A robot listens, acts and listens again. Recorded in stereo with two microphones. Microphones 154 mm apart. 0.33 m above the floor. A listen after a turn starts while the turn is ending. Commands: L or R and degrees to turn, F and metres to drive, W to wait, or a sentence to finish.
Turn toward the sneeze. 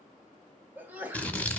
R30
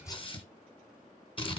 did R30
W
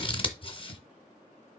I heard a sneeze, but can't make it out now. It was about 20° left or 140° right.